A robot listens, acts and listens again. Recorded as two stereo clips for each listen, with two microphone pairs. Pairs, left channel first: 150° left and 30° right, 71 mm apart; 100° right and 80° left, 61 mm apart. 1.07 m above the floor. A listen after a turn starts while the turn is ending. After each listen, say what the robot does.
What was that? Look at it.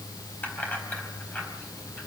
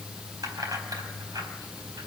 Turn 85° left.
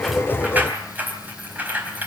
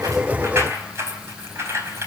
Turn 35° left.
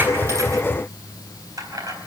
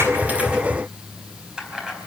Facing the keys jangling, over 4 m away.